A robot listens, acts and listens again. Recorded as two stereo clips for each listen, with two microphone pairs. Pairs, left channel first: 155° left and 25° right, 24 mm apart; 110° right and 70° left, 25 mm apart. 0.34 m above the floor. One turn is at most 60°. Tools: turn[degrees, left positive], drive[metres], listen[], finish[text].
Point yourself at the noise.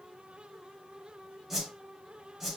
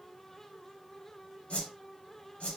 Thought: The whoosh: 110° right.
Action: turn[-60]
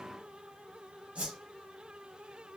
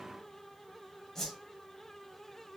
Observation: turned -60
Thought: The whoosh is now 45° right.
Action: turn[-45]
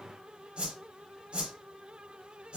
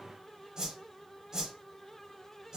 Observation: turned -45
Action: finish[Facing the whoosh.]